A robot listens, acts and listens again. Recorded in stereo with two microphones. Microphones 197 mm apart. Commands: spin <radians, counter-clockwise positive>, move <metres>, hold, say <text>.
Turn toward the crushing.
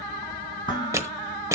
spin -0.26
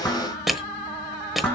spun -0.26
say Facing the crushing.